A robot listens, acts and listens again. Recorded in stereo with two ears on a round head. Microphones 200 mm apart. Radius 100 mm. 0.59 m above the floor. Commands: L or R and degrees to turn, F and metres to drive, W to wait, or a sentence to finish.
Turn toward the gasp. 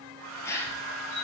L30
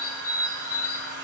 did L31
W
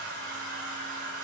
I heard a gasp, but can't make it out now. It was about 20° right or 135° left.